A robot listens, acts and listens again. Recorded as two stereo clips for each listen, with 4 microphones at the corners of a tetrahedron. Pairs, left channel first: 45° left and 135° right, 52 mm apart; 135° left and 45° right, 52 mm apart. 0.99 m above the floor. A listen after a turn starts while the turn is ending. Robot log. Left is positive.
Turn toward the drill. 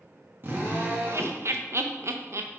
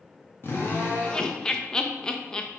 note: The drill: straight behind.
cmd yaw +180
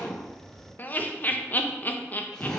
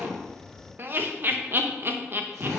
note: The drill is now 35° right.
cmd yaw -35
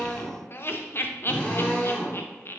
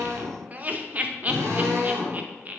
note: The drill is now 20° right.
cmd yaw -20
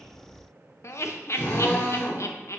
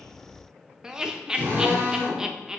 end: Found it: a drill, straight ahead.